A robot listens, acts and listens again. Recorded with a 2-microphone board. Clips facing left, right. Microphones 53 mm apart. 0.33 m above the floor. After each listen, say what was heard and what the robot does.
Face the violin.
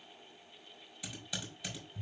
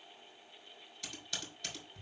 Keep listening.
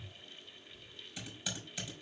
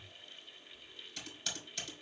Keep listening.
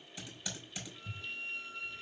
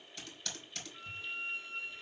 The violin: about 35° right or 145° right. Turn 35° right.
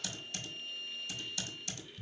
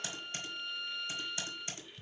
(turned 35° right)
So it is at 110° right. Turn 110° right.
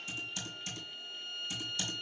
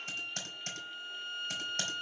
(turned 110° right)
The violin is now 10° right. Turn 10° right.
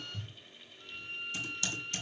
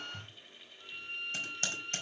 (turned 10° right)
Found it: a violin, straight ahead.